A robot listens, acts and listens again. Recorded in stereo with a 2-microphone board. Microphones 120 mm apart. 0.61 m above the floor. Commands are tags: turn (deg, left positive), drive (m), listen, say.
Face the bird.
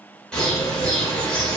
<turn deg="30"/>
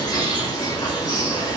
<turn deg="140"/>
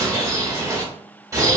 <turn deg="-30"/>
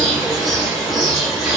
<say>Facing the bird.</say>